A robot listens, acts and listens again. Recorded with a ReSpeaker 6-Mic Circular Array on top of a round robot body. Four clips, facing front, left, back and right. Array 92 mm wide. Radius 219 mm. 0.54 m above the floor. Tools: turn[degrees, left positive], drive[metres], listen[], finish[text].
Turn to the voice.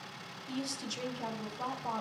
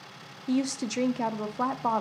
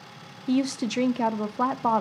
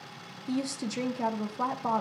Thought: The woman speaking: 165° left.
Action: turn[165]
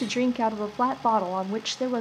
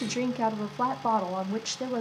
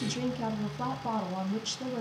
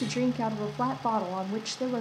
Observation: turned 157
Action: finish[Found it: a woman speaking, straight ahead.]